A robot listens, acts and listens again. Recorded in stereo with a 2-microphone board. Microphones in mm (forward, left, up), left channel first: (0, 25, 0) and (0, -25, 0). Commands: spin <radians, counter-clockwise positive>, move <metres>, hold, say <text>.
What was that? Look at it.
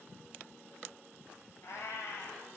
spin 1.22
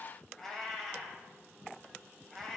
say Found it: a cat meowing, straight ahead.